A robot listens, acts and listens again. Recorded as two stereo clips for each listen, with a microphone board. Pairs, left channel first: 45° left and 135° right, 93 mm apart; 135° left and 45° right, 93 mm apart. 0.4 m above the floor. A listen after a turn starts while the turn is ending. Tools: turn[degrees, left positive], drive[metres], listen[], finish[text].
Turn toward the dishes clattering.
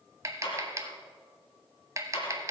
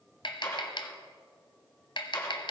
Thought: The dishes clattering: 75° left.
Action: turn[75]
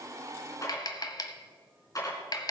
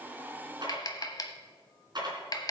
Action: finish[Facing the dishes clattering.]